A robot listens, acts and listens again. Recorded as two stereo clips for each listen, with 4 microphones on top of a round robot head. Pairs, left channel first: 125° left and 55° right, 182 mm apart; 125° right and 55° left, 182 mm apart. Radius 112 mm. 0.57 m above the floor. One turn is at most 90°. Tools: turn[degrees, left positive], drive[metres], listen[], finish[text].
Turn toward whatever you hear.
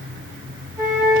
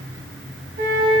Thought: The flute: 20° left.
Action: turn[20]
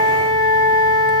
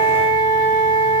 Action: finish[Facing the flute.]